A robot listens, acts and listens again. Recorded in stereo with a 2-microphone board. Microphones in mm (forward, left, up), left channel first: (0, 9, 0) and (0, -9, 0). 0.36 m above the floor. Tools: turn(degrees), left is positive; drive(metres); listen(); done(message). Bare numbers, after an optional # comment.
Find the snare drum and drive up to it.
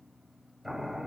listen()
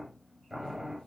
listen()
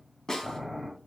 # The snare drum: about 35° left or 145° left.
turn(35)
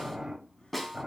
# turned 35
drive(1.0)
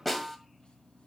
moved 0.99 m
drive(1.0)
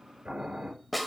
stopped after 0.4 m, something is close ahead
done("I am next to the snare drum.")